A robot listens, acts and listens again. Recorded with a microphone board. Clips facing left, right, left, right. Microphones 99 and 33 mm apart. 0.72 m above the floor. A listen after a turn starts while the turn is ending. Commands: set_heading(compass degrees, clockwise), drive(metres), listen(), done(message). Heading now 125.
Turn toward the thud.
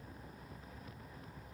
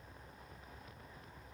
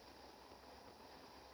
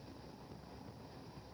listen()
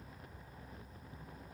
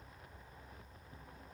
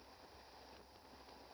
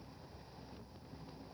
listen()
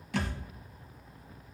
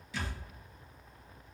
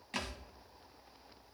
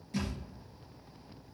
set_heading(55)
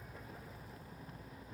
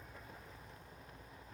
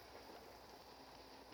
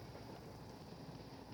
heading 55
listen()
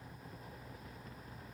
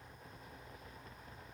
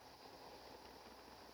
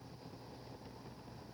done("I heard a thud, but can't make it out now. It was about straight ahead or 40° left.")